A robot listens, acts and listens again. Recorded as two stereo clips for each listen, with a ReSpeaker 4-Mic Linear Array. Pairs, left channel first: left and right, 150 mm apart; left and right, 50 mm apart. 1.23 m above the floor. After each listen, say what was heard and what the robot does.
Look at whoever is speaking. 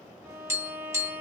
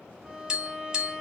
Keep listening.
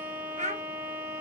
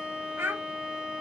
The child speaking: about 50° right or 130° right. Turn 50° right.
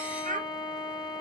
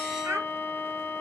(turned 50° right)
So it is at 70° right. Turn 70° right.
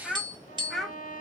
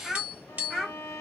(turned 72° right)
Facing the child speaking.